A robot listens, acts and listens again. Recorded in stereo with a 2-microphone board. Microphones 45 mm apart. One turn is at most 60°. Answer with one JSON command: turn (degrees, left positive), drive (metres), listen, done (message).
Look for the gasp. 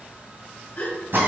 {"turn": 35}
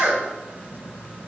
{"listen": true}
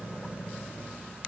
{"done": "I heard a gasp, but can't make it out now. It was about straight ahead or 110° left."}